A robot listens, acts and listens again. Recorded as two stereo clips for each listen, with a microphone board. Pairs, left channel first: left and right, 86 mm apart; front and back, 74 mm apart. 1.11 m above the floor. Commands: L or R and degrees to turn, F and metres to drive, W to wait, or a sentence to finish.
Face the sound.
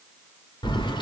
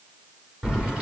L105
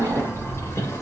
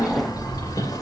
L35
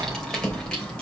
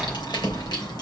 L10
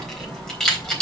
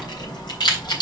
L10
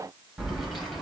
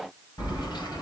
Found it: keys jangling, straight ahead.